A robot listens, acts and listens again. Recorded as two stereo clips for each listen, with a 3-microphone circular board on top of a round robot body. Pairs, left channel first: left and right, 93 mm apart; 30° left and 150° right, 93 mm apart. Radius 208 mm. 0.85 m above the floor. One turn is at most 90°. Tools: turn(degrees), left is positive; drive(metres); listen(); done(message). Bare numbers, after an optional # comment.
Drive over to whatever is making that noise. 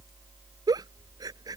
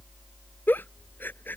# The giggle: 40° right.
turn(-40)
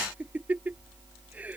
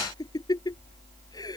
# The giggle is now 15° right.
turn(-15)
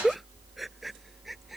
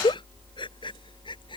drive(1.0)
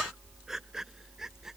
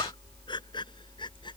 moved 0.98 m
drive(1.0)
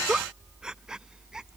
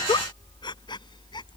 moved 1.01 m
drive(1.0)
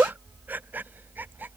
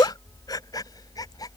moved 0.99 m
# The giggle is now 15° right.
turn(-15)
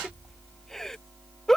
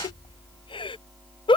drive(1.0)
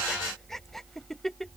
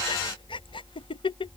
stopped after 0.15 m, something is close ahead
done("Arrived at the giggle, straight ahead.")